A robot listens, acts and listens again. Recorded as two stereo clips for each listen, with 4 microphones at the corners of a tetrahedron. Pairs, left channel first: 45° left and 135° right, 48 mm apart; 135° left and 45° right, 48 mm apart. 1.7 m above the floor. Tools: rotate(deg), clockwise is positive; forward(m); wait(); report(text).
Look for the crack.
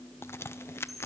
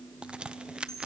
rotate(-20)
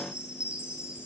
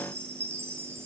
report("I heard a crack from this way, but can't make it out now.")